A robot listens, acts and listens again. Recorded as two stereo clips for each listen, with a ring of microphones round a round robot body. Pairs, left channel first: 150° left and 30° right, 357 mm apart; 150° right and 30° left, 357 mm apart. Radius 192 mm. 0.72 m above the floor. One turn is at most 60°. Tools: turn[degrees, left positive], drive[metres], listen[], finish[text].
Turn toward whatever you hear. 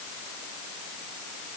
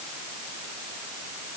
Action: listen[]
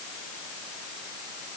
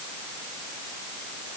Action: listen[]
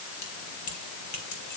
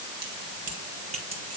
Thought: The keys jangling: 105° left.
Action: turn[60]
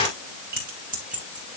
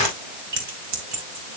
Thought: The keys jangling is now 40° left.
Action: turn[40]
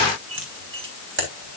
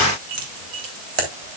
Thought: The keys jangling is now 30° left.
Action: turn[30]
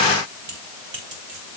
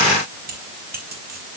Thought: The keys jangling is now 35° right.
Action: turn[-35]
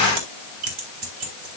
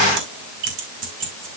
Thought: The keys jangling is now 10° right.
Action: turn[-10]
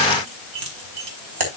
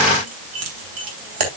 Action: finish[Facing the keys jangling, 2 to 4 m away.]